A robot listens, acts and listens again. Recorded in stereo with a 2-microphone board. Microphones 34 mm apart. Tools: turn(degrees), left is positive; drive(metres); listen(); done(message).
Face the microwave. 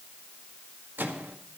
turn(degrees=-70)
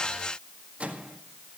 turn(degrees=-40)
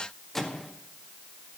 turn(degrees=10)
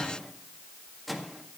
done("Found it: a microwave, straight ahead.")